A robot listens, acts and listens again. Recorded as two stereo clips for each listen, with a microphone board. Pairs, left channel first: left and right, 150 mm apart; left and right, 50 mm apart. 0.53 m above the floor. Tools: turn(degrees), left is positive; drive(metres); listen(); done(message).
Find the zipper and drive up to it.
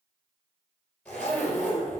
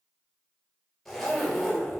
turn(degrees=30)
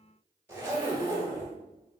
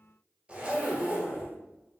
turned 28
turn(degrees=-20)
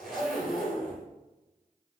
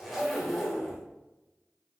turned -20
drive(metres=1.0)
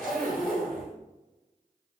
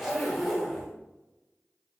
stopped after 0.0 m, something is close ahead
done("Something is in my way. I am facing the zipper but have not reached it.")